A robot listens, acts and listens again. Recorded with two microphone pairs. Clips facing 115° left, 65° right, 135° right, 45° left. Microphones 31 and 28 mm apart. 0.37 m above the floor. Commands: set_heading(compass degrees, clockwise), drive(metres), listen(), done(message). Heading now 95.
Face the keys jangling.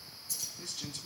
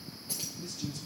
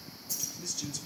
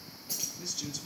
done("Found it: keys jangling, straight ahead.")